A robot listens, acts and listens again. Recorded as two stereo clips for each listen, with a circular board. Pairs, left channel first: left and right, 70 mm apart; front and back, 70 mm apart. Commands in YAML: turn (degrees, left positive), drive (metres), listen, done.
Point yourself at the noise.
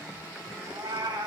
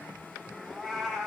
turn: -90
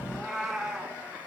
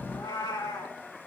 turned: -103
done: "Found it: a cat meowing, straight ahead, 2 to 4 m away."